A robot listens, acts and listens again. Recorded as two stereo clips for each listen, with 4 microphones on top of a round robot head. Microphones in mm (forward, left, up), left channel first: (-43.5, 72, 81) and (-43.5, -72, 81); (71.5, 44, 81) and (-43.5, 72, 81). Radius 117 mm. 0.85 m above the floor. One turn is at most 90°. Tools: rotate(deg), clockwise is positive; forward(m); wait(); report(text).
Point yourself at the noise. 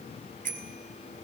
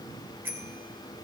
rotate(90)
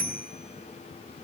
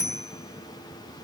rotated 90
rotate(55)
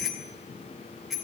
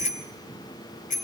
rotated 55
report("Found it: a bicycle bell, straight ahead, 2 to 4 m away.")